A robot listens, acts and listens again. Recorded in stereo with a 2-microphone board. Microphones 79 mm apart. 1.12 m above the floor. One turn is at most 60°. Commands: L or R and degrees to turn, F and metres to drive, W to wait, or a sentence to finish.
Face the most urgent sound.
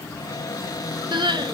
R60
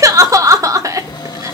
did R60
R45
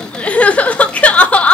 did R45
L15
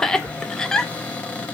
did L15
Found it: crying, straight ahead, under 1 m away.